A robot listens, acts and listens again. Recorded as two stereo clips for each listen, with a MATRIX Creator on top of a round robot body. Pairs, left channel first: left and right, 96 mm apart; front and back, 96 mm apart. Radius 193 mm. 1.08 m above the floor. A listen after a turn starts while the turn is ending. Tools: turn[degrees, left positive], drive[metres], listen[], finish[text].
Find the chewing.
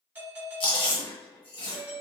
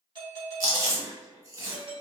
Thought: The chewing: 125° left.
Action: turn[125]
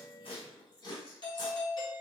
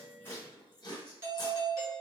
Thought: The chewing is now 50° left.
Action: turn[50]
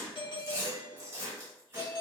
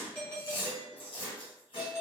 Thought: The chewing is now 25° right.
Action: turn[-25]
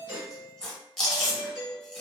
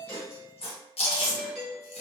Action: finish[Facing the chewing.]